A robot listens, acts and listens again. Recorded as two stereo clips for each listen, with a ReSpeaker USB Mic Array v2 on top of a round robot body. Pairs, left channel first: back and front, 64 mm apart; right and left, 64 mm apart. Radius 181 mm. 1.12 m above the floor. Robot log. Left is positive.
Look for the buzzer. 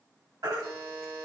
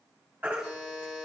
note: The buzzer: 15° right.
cmd yaw -15
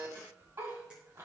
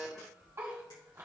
end: Found it: a buzzer, straight ahead.